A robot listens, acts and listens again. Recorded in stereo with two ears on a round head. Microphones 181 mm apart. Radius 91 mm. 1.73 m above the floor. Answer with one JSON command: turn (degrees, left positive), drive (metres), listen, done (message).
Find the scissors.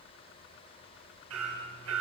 {"listen": true}
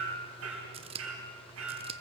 {"turn": -30}
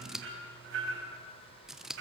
{"done": "Facing the scissors."}